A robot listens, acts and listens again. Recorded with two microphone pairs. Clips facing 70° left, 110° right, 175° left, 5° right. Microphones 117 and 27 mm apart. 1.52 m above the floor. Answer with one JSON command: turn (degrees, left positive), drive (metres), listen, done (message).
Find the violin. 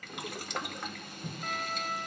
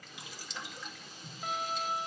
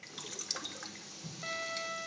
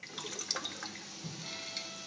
{"turn": 175}
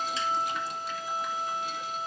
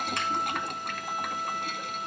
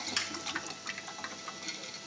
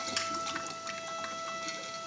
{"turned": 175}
{"done": "Found it: a violin, straight ahead."}